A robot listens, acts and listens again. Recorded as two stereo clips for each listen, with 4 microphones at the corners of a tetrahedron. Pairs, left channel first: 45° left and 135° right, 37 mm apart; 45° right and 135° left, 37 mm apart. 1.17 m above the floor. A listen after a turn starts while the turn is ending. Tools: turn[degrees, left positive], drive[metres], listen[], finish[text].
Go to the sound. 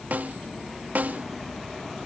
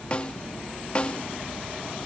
Thought: The snare drum: 100° right.
Action: turn[-100]
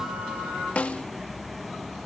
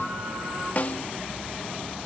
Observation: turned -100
Action: drive[1.0]
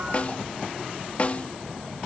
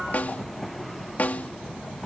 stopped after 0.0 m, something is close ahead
Action: finish[Blocked. The snare drum is further on, straight ahead.]